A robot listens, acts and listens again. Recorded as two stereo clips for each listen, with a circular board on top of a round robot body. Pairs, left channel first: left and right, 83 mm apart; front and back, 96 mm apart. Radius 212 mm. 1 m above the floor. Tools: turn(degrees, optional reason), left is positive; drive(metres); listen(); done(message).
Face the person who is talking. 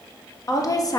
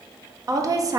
turn(degrees=130, reason="The woman speaking: 130° left.")
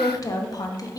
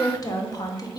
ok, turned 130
turn(degrees=50, reason="The woman speaking is now 50° left.")
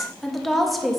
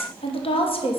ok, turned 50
done("Found it: a woman speaking, straight ahead.")